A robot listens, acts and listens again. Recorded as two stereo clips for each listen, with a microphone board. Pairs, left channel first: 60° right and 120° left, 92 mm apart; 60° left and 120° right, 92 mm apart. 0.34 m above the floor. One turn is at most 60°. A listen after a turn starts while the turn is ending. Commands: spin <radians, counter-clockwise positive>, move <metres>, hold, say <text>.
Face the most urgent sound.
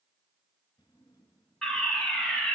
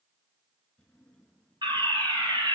spin -1.05
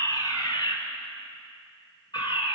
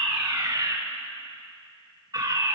spin -1.05
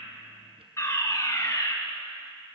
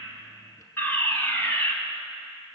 say Facing the fire alarm, 2 to 4 m away.